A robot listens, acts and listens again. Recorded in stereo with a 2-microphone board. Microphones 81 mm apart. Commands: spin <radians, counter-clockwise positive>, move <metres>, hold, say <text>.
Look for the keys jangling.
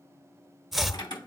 spin 1.13
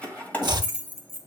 spin 0.52
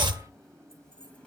hold
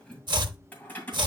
spin 0.44
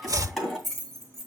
say Facing the keys jangling, 2 to 4 m away.